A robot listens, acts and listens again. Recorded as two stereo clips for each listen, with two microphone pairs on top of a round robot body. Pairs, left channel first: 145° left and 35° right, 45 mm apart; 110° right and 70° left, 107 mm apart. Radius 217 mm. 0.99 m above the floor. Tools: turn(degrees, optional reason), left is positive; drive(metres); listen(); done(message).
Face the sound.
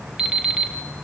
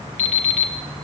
turn(degrees=-110, reason="The alarm clock: 110° right.")
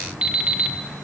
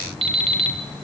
turn(degrees=30, reason="The alarm clock is now 30° left.")
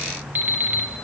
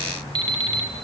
turn(degrees=20, reason="The alarm clock is now 20° left.")
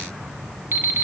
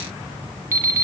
done("Facing the alarm clock.")